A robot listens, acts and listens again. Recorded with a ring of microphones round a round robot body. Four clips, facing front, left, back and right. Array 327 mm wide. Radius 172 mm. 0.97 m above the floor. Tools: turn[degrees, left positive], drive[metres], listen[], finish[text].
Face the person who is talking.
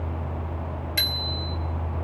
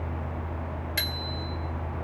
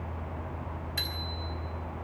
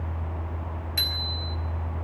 Action: listen[]
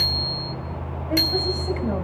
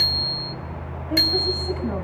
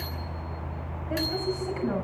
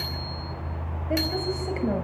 Thought: The woman speaking: 50° right.
Action: turn[-50]
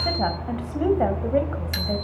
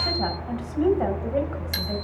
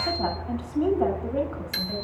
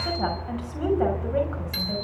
Action: finish[Found it: a woman speaking, straight ahead.]